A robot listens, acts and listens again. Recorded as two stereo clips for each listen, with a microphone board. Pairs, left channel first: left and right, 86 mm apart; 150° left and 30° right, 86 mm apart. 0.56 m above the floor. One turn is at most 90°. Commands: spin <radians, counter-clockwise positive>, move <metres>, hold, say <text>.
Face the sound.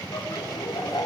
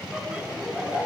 spin 0.87
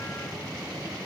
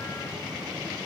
hold
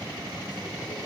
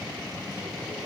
hold
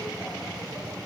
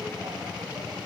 say Facing where the laughter came from. I can't hear it now.